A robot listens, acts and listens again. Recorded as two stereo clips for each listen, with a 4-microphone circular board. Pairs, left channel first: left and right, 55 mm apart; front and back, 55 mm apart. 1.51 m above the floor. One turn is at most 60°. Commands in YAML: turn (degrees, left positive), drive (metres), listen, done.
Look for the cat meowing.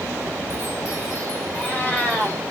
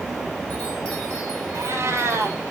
turn: 60
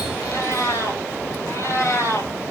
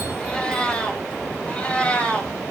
turn: 60
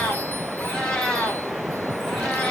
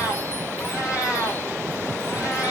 turn: 15
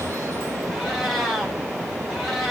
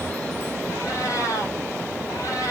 done: "Facing the cat meowing."